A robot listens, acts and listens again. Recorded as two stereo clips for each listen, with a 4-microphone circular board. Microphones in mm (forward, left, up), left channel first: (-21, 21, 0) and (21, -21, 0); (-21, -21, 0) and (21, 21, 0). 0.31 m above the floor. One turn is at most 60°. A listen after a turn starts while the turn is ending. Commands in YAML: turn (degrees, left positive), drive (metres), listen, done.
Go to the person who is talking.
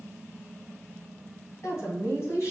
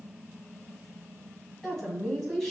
turn: 60
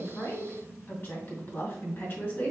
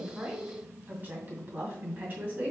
turn: 60
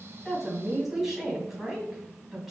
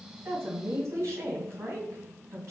turn: 40
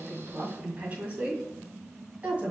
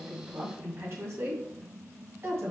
turn: 15
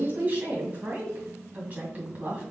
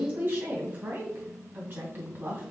drive: 1.0
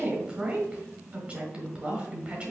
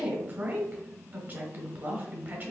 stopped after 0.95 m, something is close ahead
turn: 15
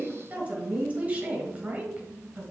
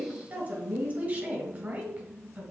done: "Arrived at the woman speaking, straight ahead."